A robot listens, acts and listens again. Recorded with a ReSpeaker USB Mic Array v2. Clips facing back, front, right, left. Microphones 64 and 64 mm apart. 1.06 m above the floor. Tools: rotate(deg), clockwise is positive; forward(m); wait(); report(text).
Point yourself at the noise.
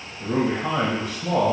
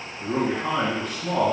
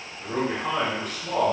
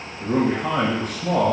rotate(-125)
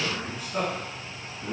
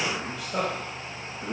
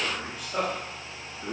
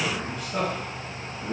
report("Found it: a man speaking, straight ahead.")